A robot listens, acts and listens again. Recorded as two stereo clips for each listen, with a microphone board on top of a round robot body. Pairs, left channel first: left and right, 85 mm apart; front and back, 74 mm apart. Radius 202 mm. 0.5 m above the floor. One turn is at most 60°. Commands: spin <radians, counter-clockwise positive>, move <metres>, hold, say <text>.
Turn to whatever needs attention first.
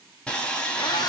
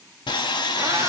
hold
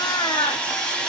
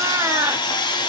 hold
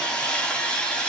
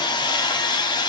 say I can't make out anything urgent to turn to.